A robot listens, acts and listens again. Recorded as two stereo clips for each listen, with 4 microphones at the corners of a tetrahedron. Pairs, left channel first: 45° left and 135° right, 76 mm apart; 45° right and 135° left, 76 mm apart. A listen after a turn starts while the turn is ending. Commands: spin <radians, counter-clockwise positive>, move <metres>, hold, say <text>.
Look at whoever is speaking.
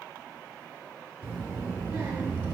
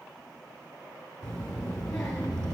spin -2.09
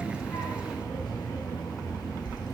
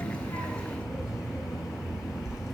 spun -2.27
spin 0.17
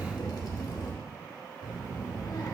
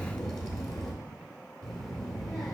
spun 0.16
say Found it: a child speaking, straight ahead.